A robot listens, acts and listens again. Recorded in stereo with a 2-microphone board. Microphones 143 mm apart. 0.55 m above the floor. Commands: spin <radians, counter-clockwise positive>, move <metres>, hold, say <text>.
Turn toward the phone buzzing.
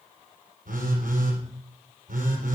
spin -1.57
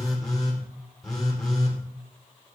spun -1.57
say Found it: a phone buzzing, straight ahead.